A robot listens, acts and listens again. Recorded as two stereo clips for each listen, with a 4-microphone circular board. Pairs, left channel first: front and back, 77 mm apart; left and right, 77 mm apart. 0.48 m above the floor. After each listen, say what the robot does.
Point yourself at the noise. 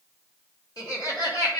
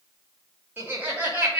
Turn 20° right.
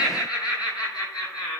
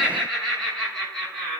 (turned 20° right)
Turn 10° left.
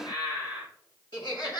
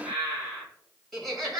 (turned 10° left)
Found it: laughter, straight ahead, over 4 m away.